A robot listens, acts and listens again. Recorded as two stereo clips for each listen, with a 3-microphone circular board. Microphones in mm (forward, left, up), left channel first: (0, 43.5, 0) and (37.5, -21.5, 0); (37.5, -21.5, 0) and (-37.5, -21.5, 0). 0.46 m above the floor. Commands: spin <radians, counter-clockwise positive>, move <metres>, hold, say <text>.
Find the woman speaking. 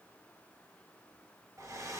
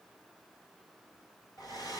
hold
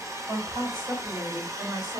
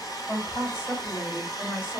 spin -0.96
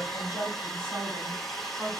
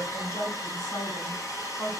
say Facing the woman speaking, 2 to 4 m away.